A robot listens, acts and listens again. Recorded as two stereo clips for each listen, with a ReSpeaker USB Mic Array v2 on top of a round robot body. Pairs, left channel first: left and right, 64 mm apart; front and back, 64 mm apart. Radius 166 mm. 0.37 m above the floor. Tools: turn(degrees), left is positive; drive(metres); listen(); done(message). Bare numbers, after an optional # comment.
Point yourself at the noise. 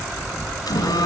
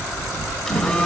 # The phone buzzing: 85° left.
turn(85)
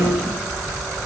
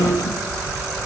done("Facing the phone buzzing, 2 to 4 m away.")